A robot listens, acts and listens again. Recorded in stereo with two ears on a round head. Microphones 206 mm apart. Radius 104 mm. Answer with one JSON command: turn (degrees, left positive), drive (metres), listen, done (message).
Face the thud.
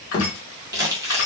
{"turn": 40}
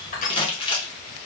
{"listen": true}
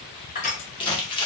{"done": "I heard a thud, but can't make it out now. It was about straight ahead or 100° left."}